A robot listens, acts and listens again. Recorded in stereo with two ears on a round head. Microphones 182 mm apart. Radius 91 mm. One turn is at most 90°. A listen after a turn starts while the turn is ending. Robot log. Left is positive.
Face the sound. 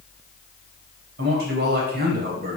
note: The man speaking: about 50° right or 130° right.
cmd yaw -50
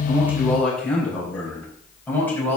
note: So it is at 10° left.
cmd yaw +10
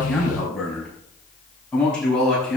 end: Facing the man speaking.